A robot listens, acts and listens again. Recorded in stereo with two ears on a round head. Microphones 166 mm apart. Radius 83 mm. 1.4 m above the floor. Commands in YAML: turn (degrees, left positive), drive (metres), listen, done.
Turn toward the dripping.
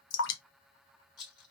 turn: 70
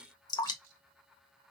turn: 20
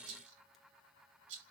listen: true
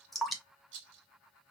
done: "Found it: dripping, straight ahead."